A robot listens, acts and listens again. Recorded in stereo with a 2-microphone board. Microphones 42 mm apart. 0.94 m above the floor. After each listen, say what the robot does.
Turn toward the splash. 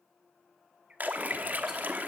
Turn 40° right.
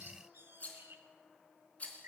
Keep listening.
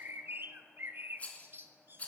I heard a splash, but can't make it out now. It was about straight ahead or 100° right.